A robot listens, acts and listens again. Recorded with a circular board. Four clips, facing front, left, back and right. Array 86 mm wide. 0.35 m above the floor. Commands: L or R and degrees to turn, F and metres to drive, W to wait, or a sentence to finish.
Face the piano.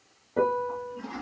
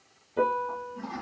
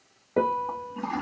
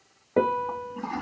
R115
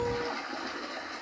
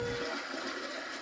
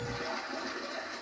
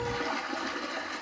W
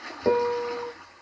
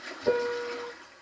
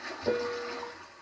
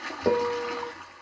R50
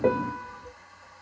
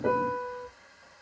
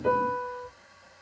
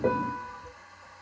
R15
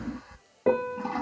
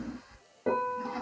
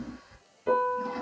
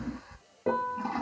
Found it: a piano, straight ahead.